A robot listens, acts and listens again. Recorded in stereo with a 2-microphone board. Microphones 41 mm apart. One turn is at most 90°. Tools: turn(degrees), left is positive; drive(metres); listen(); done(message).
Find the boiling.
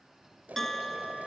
turn(degrees=-45)
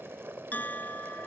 turn(degrees=-90)
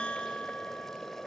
turn(degrees=10)
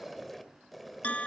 done("Found it: boiling, straight ahead.")